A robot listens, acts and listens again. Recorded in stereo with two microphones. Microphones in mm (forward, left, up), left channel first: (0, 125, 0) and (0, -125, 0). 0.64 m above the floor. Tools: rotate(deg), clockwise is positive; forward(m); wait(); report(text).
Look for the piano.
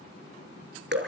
wait()
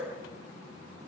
wait()
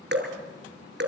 report("I can't make out a piano, only dripping.")